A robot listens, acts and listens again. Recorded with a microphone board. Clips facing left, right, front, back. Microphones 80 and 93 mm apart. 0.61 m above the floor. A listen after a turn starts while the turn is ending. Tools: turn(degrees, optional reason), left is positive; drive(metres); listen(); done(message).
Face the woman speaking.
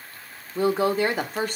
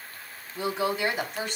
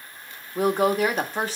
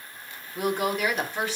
turn(degrees=50, reason="The woman speaking: 50° left.")
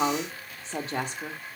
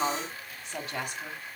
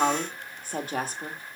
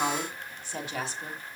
turn(degrees=35, reason="The woman speaking is now 35° left.")
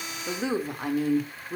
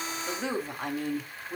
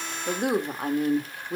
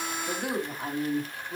done("Facing the woman speaking, 1 to 2 m away.")